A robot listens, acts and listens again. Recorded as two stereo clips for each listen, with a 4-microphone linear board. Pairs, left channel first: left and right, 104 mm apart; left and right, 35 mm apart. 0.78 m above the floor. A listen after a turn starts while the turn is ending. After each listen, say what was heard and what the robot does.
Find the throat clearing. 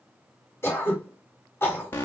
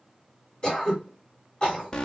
The throat clearing: about 25° left or 155° left. Turn 25° left.
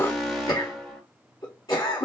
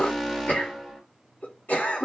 So it is at 130° left. Turn 130° left.
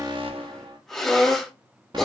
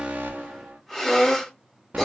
Found it: throat clearing, straight ahead.